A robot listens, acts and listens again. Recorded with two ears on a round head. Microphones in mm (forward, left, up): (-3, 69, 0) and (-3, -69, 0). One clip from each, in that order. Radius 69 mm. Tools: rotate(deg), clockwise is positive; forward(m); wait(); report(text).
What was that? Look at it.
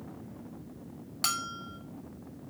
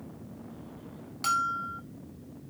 rotate(-30)
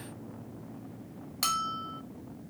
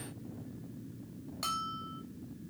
rotate(-120)
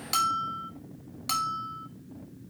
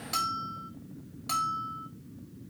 rotate(-30)
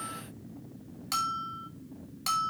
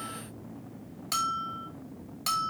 report("Found it: a bell, straight ahead.")